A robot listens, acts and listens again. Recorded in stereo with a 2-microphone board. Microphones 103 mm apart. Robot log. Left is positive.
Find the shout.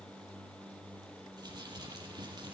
cmd idle
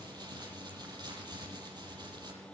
cmd idle
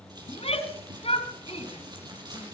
note: The shout: about 70° left or 110° left.
cmd yaw +70
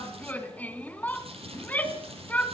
note: So it is at 15° left.
cmd yaw +15
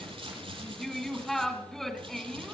end: Found it: a shout, straight ahead, 2 to 4 m away.